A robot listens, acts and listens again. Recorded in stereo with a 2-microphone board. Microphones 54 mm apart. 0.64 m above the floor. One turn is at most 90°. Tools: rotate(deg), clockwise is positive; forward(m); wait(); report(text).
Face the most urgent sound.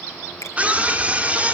rotate(25)
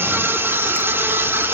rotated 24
rotate(90)
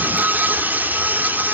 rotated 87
rotate(40)
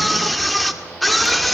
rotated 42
report("Found it: a scream, straight ahead.")